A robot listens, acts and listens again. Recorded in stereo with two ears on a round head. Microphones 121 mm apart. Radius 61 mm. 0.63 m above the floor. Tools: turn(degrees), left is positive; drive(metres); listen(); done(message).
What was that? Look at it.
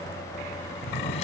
turn(degrees=55)
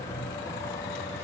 listen()
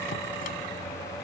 listen()
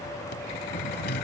turn(degrees=70)
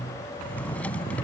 turn(degrees=10)
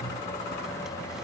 listen()
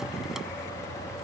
listen()
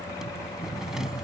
done("Facing the drawer.")